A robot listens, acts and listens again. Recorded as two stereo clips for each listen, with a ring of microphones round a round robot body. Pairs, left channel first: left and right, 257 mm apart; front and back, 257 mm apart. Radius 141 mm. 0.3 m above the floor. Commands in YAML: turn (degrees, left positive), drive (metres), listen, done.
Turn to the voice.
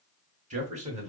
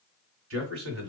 turn: -150
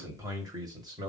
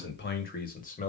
turn: -30
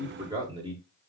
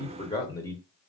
turn: -65
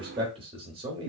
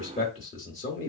turn: -35
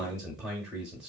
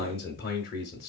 done: "Facing the man speaking."